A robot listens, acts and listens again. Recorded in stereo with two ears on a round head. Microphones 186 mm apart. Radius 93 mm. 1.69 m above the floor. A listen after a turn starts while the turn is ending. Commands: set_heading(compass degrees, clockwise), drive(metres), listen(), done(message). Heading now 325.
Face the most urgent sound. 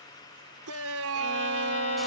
set_heading(55)
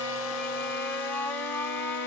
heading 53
set_heading(43)
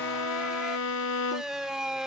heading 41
done("Facing the shout.")